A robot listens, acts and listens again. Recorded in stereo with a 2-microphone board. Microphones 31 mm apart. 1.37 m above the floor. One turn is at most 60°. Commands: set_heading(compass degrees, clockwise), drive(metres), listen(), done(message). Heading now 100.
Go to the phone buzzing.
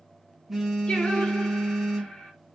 set_heading(130)
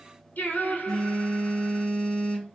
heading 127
set_heading(107)
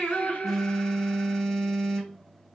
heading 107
drive(1.0)
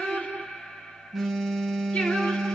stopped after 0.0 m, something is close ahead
done("Something is in my way. I am facing the phone buzzing but have not reached it.")